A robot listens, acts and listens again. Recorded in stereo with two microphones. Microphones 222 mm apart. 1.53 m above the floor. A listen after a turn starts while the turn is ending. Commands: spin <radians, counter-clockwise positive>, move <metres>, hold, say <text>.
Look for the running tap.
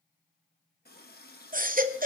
spin 0.79
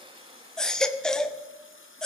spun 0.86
spin 1.40
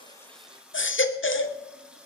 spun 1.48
say Found it: a running tap, straight ahead, 1 to 2 m away.